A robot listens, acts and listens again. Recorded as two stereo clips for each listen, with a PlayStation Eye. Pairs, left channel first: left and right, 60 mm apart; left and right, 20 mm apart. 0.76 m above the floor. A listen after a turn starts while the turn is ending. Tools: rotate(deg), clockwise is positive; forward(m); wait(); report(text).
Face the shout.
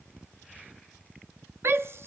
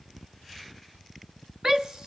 rotate(40)
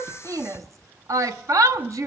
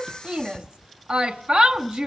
rotate(90)
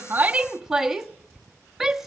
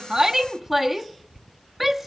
report("Found it: a shout, straight ahead.")